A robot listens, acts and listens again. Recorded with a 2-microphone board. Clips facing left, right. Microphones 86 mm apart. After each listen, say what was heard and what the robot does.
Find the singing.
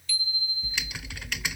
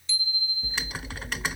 Keep listening.
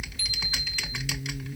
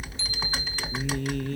Turn 90° right.
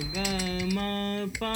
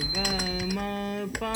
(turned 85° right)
Found it: singing, straight ahead.